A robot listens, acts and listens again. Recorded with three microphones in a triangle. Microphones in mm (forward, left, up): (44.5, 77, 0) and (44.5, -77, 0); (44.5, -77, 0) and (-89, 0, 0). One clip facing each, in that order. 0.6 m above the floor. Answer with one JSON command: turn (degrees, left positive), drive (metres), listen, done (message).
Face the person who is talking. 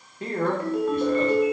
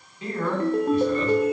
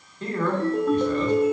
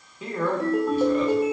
{"turn": 70}
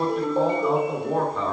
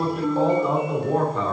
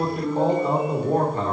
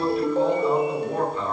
{"done": "Facing the man speaking, 1 to 2 m away."}